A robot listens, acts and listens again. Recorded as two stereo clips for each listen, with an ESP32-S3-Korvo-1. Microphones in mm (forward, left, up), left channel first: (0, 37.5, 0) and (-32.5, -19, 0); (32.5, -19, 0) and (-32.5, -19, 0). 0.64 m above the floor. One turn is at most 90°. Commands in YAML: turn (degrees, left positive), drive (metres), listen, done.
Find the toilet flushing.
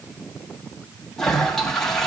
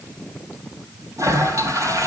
turn: 90
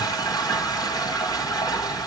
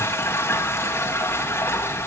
turn: 55
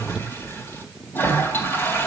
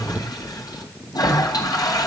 done: "Found it: a toilet flushing, straight ahead."